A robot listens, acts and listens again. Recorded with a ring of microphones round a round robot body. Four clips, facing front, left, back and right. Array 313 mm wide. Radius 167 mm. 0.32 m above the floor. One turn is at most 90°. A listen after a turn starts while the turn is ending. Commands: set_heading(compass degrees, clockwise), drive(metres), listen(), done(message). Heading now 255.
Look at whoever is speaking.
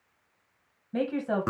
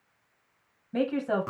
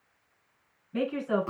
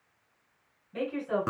set_heading(210)
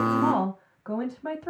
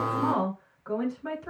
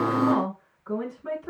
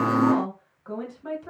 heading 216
done("Found it: a woman speaking, straight ahead.")